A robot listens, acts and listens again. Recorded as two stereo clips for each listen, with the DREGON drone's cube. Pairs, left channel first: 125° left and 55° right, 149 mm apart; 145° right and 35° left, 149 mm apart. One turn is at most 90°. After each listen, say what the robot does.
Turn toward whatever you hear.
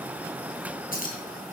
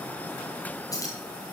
Turn 90° left.
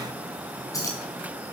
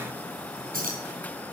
Turn 55° left.
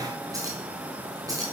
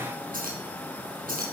Turn 10° left.
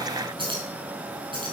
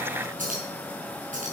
Found it: keys jangling, straight ahead.